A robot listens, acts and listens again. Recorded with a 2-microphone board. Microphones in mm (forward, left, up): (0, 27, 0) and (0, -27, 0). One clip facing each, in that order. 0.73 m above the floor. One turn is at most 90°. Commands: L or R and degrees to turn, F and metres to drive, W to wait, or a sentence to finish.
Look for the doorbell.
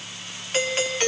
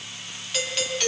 L35
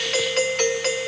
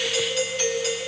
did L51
L85
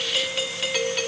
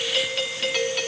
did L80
Facing the doorbell, 1 to 2 m away.